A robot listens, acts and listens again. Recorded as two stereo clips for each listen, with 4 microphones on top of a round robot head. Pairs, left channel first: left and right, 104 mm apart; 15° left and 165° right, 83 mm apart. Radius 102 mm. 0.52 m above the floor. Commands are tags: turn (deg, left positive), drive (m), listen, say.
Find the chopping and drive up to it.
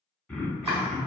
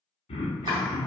<turn deg="-150"/>
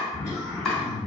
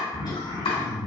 <drive m="1.0"/>
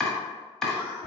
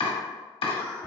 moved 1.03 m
<drive m="1.0"/>
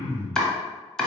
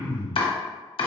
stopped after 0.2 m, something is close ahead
<say>Arrived at the chopping, straight ahead.</say>